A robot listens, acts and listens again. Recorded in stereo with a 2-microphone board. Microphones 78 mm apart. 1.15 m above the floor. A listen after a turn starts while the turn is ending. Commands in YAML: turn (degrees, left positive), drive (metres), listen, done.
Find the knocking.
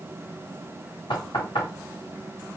turn: 75
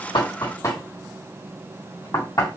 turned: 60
turn: 45
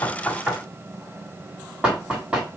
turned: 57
turn: -10
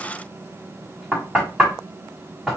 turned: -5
done: "Found it: knocking, straight ahead, 1 to 2 m away."